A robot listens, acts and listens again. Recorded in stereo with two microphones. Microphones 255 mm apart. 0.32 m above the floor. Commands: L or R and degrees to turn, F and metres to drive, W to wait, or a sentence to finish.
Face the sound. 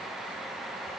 W
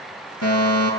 L75
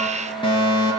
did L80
L20
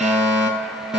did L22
Facing the fire alarm, over 4 m away.